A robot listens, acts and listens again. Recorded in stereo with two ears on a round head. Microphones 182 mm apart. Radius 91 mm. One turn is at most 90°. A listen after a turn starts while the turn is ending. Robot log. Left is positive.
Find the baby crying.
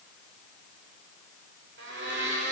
cmd idle
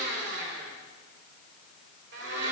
cmd idle
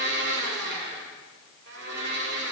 end: I can't make out a baby crying, only a blender.